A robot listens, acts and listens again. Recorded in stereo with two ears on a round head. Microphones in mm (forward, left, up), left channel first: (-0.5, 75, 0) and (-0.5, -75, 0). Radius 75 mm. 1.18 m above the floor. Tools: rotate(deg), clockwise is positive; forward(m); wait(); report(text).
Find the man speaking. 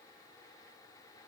wait()
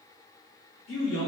rotate(-90)
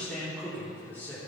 rotate(-10)
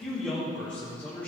rotate(-15)
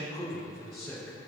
report("Facing the man speaking, 2 to 4 m away.")